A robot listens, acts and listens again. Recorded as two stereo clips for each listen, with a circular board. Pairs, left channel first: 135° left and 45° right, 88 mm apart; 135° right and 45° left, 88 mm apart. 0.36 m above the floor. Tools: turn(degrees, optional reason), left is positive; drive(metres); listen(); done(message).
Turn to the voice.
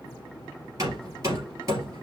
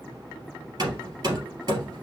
listen()
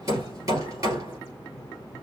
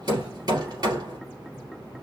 listen()
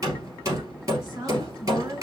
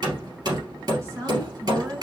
done("Facing the woman speaking.")